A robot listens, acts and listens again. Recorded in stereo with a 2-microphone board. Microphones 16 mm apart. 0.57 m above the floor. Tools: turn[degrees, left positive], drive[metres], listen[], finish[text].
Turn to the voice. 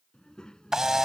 Thought: The child speaking: about 60° left or 120° left.
Action: turn[60]
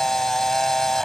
Action: listen[]
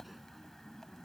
Action: finish[Facing the child speaking.]